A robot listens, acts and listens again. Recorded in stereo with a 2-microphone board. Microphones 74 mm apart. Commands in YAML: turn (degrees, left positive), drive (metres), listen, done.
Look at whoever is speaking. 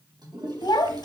turn: 65
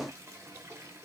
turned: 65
listen: true
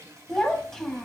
done: "Found it: a child speaking, straight ahead, 1 to 2 m away."